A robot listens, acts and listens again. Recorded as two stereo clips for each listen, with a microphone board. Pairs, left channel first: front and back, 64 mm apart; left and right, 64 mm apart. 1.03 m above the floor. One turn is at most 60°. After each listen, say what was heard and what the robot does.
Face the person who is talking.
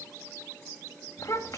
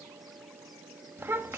The child speaking: 35° right. Turn 35° right.
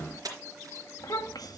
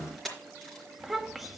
Found it: a child speaking, straight ahead, 1 to 2 m away.